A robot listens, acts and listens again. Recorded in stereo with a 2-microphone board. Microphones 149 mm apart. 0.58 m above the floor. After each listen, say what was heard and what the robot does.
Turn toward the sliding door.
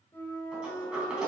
Turn 30° right.
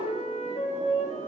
Keep listening.
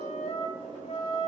So it is at 145° right. Turn 145° right.
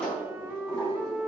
Found it: a sliding door, straight ahead.